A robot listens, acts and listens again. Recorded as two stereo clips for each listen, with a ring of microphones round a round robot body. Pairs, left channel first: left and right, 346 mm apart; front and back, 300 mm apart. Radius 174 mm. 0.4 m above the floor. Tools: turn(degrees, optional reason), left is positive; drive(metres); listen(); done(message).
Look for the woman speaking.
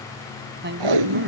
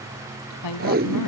turn(degrees=-30, reason="The woman speaking: 30° right.")
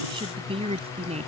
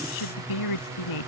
turn(degrees=-20, reason="The woman speaking is now 20° right.")
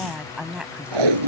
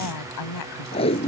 done("Facing the woman speaking.")